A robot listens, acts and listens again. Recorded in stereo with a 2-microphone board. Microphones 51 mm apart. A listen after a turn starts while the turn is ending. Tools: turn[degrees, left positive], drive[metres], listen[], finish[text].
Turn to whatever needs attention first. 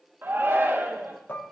Thought: The shout: about 45° right or 135° right.
Action: turn[-45]
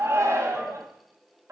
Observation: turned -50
Thought: So it is at 85° right.
Action: turn[-85]
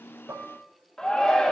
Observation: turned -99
Thought: The shout is now 15° left.
Action: turn[15]
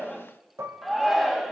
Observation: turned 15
Action: finish[Found it: a shout, straight ahead.]